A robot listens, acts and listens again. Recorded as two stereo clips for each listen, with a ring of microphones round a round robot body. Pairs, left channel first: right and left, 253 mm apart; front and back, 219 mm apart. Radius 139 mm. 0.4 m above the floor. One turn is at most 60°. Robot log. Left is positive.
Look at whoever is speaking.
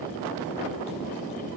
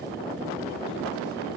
cmd idle
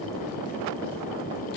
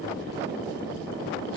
cmd idle
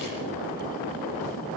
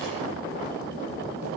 end: I can't make out anyone speaking.